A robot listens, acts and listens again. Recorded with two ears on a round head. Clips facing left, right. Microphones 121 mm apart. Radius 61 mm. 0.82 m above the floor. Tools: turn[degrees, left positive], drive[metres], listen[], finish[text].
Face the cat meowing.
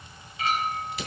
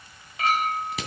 Action: listen[]
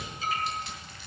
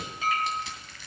Action: listen[]
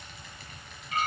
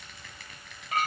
Action: finish[I can't make out a cat meowing, only crushing and a clink.]